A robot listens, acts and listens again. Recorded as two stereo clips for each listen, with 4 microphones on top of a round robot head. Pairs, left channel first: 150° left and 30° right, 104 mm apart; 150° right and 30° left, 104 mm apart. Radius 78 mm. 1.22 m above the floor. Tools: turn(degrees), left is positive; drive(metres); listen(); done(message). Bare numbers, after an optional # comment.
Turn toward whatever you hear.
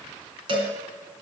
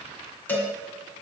# The cowbell: 75° right.
turn(-75)
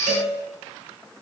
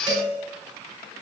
# The cowbell is now 20° right.
turn(-20)
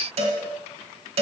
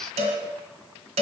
done("Found it: a cowbell, straight ahead.")